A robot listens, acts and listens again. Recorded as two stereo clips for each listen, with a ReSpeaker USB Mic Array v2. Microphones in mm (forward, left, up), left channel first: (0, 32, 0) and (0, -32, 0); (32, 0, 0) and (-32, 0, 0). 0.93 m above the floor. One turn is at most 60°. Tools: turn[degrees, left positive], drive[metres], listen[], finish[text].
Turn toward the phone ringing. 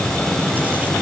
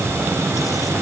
Action: listen[]
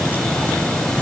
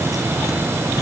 Action: listen[]
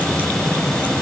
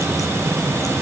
Action: finish[I can't make out a phone ringing to turn to.]